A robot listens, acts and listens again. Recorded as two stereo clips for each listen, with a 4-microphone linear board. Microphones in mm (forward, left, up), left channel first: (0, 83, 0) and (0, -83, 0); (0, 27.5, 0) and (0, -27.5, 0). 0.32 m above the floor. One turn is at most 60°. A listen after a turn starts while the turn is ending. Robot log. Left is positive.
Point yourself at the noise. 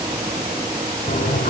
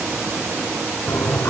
note: The toilet flushing: about 60° left or 120° left.
cmd yaw +60
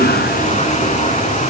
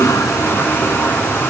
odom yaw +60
note: So it is at 50° left.
cmd yaw +50
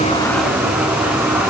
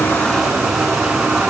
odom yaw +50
note: The toilet flushing is now 10° right.
cmd yaw -10
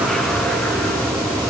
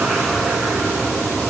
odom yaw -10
end: Facing the toilet flushing, 2 to 4 m away.